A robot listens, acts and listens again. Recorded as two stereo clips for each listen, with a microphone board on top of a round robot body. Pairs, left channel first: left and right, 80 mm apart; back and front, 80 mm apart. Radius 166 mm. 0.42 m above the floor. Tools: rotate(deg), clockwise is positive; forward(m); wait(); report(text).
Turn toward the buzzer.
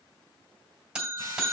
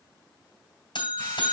rotate(175)
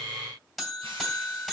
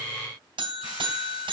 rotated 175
report("Found it: a buzzer, straight ahead.")